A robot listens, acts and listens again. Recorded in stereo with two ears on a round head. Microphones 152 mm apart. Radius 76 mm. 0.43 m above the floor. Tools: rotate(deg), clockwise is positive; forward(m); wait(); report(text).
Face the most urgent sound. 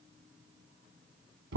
wait()
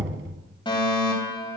rotate(-30)
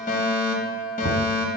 rotate(-115)
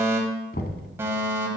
rotate(20)
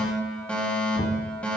report("Facing the fire alarm.")